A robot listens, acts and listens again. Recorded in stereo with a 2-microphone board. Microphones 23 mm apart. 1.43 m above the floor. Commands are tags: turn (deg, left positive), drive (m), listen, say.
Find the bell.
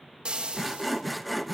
<listen/>
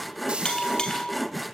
<turn deg="40"/>
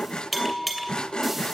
<say>Facing the bell.</say>